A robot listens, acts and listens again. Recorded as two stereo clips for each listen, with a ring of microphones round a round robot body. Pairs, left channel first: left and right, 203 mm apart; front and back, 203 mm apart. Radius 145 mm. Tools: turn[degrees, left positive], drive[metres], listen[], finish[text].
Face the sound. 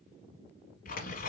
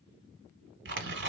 Thought: The tearing paper: 150° left.
Action: turn[150]
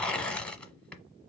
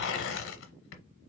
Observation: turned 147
Action: finish[Found it: tearing paper, straight ahead.]